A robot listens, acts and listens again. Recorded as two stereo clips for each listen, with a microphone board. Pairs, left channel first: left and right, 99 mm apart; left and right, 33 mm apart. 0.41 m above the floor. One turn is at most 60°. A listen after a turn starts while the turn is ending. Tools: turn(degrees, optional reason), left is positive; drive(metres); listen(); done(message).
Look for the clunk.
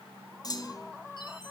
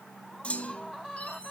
turn(degrees=40, reason="The clunk: about 40° left or 140° left.")
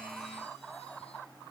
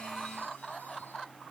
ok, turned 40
listen()
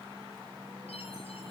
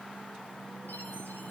done("I heard a clunk, but can't make it out now. It was about straight ahead or 100° left.")